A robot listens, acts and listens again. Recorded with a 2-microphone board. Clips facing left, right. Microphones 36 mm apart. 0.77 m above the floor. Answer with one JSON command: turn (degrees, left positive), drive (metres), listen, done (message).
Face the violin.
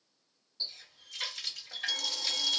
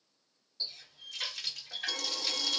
{"turn": -50}
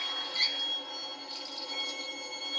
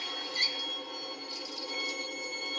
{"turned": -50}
{"turn": -10}
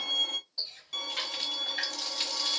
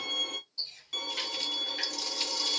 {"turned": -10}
{"done": "Found it: a violin, straight ahead, 1 to 2 m away."}